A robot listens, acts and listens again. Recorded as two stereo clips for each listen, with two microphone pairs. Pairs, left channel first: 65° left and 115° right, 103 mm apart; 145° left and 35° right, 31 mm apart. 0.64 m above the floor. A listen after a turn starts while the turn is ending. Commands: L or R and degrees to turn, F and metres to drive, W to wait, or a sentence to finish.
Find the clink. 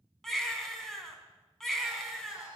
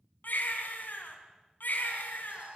W
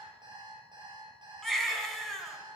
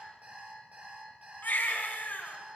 W
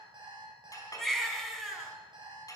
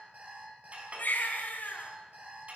L10
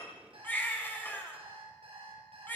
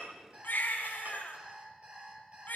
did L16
W
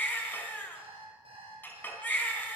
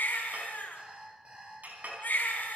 Facing the clink.